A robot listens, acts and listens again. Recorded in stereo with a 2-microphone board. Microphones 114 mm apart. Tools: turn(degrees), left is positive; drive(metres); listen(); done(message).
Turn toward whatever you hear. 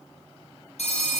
turn(degrees=70)
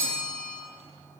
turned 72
turn(degrees=10)
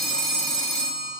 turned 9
done("Found it: a phone ringing, straight ahead.")